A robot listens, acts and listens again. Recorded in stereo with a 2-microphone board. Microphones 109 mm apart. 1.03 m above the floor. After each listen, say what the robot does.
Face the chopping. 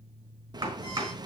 Turn 40° right.
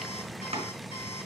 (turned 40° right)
Turn 100° right.
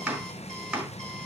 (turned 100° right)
Turn 10° right.
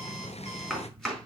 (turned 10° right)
Found it: chopping, straight ahead.